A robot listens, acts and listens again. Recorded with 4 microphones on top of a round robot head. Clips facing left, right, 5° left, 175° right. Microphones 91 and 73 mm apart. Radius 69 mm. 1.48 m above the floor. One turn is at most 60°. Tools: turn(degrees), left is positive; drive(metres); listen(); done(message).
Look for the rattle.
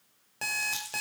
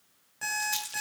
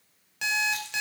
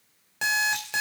turn(degrees=-55)
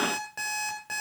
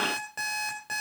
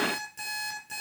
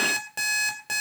listen()
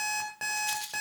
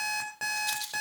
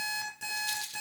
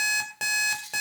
turn(degrees=-15)
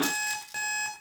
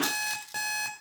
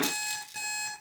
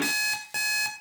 listen()
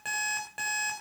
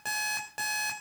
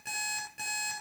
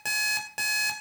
listen()
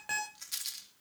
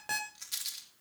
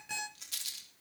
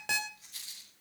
done("Facing the rattle, 2 to 4 m away.")